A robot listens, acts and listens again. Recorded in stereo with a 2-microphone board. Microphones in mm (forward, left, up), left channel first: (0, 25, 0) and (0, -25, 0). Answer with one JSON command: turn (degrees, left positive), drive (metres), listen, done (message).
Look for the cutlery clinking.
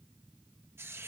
{"listen": true}
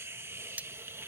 {"turn": -35}
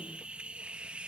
{"listen": true}
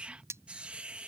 {"turn": -110}
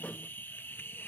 {"listen": true}
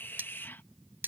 {"turn": -40}
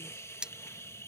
{"turn": -15}
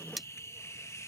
{"done": "Facing the cutlery clinking."}